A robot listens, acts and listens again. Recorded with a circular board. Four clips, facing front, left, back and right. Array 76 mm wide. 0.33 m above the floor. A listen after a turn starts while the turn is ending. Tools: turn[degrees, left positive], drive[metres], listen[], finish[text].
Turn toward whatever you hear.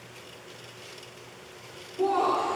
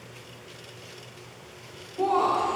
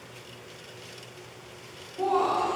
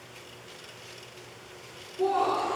Thought: The laughter: 105° left.
Action: turn[105]
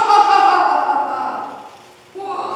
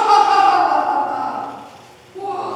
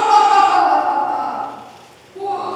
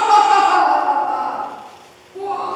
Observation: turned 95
Action: finish[Found it: laughter, straight ahead.]